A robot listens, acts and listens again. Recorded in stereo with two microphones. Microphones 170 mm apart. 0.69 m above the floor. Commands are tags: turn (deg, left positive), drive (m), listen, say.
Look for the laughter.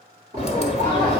<turn deg="-60"/>
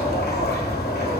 <listen/>
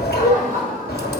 <turn deg="-45"/>
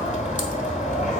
<listen/>
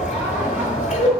<listen/>
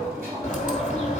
<turn deg="-15"/>
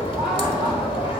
<say>Facing the laughter, over 4 m away.</say>